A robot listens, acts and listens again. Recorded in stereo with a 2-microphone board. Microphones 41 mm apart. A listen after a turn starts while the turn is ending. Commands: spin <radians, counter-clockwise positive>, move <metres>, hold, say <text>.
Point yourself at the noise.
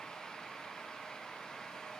hold
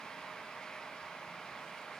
hold
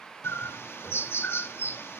spin 1.57
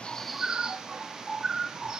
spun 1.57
spin -0.26
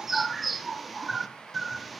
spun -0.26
say Found it: a bird, straight ahead, 1 to 2 m away.